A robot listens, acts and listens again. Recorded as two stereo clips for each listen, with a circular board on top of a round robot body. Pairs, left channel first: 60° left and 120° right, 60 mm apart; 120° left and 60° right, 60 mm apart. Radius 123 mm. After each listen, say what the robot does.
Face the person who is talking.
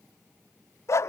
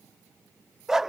Keep listening.
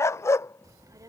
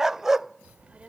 Turn 130° right.
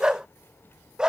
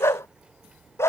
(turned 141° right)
Turn 15° left.
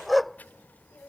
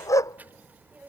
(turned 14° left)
Found it: a child speaking, straight ahead.